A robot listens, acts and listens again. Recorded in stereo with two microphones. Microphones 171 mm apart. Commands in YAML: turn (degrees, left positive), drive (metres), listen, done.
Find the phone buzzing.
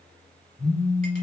turn: 15
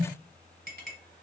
turn: 150
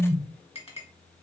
done: "Found it: a phone buzzing, straight ahead."